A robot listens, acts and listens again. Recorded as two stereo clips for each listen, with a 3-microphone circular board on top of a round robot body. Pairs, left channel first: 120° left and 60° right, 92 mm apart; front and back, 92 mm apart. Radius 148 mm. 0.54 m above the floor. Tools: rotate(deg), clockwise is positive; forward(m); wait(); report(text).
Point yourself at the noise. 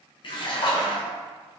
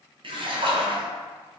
rotate(-155)
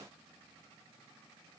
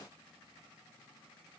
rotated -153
report("I heard a splash from this way, but can't make it out now.")